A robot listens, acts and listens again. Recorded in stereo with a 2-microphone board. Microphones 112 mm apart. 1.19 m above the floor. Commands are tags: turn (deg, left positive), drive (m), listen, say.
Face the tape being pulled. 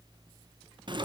<listen/>
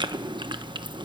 <listen/>
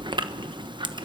<say>I can't make out tape being pulled, only chewing.</say>